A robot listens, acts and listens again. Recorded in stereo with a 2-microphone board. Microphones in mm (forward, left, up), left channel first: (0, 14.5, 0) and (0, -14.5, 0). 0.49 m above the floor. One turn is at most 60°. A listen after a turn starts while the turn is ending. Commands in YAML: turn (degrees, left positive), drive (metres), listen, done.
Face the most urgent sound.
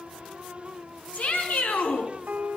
turn: 60
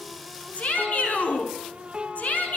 turn: 60
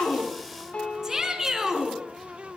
turn: -10
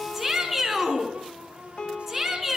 done: "Found it: a shout, straight ahead, over 4 m away."